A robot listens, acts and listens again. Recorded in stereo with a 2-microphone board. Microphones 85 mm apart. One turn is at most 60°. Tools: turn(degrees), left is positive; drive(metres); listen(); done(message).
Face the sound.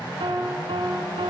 turn(degrees=-60)
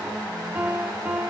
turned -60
turn(degrees=-20)
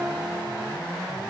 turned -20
done("Found it: a piano, straight ahead.")